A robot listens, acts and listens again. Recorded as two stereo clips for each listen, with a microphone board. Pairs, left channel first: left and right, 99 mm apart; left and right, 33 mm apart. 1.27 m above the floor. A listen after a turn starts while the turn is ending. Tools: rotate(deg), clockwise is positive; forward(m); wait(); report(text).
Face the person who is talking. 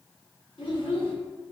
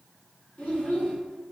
rotate(-60)
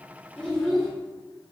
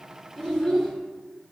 report("Facing the child speaking.")